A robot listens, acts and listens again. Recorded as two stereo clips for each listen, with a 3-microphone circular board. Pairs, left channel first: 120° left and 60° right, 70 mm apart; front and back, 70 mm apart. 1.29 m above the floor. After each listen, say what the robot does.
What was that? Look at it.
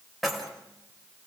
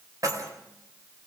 Turn 150° right.
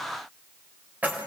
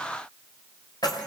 Facing the keys jangling.